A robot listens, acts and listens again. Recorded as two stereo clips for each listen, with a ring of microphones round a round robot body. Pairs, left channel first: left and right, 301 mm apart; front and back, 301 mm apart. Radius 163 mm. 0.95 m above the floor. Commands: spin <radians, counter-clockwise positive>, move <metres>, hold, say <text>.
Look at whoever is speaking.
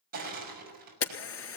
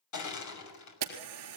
hold
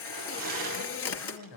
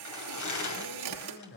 spin 1.05
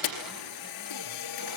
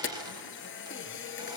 hold
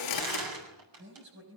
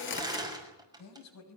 spin -0.61
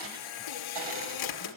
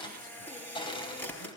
hold
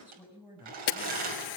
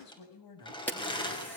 say Facing the man speaking.